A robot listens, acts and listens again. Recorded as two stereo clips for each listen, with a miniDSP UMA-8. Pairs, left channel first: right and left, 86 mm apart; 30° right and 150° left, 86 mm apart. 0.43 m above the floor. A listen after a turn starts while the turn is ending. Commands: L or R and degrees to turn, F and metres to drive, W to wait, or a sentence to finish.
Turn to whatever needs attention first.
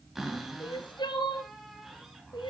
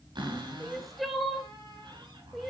R120
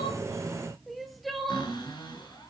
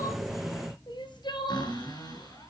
Found it: crying, straight ahead, 1 to 2 m away.